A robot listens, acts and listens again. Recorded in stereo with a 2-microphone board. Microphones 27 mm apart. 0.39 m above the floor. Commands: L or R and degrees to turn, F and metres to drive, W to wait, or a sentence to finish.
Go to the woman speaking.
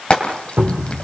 W
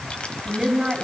R25
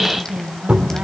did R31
R125
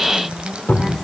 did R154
L30
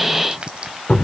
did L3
L30
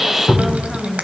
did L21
L10
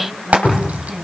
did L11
F1.0
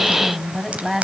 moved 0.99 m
F1.0
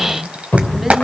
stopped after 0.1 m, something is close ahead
Blocked. The woman speaking is further on, straight ahead.